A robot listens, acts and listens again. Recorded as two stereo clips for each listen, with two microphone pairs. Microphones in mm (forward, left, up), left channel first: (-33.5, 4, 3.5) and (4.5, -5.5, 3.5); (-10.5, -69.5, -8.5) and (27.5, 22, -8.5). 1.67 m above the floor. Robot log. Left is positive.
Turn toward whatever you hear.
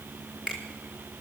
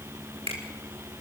note: The finger snap: 55° left.
cmd yaw +55
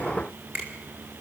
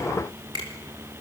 note: The finger snap is now 20° left.
cmd yaw +20
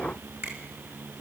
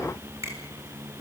end: Facing the finger snap, over 4 m away.